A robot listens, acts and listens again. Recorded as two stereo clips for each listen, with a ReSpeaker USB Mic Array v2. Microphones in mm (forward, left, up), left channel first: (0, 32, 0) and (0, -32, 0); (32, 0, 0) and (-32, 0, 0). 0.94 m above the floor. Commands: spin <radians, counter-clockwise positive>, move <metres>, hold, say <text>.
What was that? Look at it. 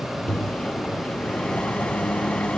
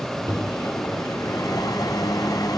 spin 0.35
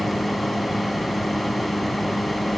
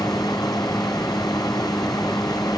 say Found it: a microwave, straight ahead.